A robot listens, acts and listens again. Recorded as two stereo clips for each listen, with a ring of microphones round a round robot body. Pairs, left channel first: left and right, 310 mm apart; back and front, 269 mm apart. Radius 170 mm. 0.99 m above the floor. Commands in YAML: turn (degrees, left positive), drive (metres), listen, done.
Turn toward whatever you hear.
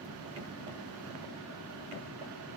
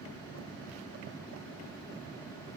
listen: true
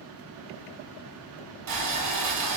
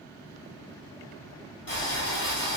turn: -130
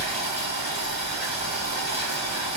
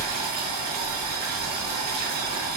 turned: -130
turn: -20
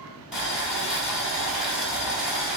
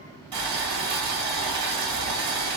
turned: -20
done: "Facing the boiling."